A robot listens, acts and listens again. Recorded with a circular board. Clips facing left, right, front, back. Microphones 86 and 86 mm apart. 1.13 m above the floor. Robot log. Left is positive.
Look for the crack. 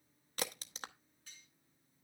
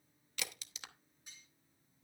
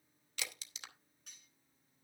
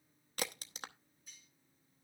note: The crack: 135° left.
cmd yaw +135
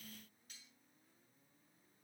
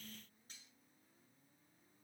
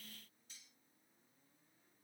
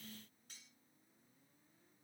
end: I heard a crack from this way, but can't make it out now.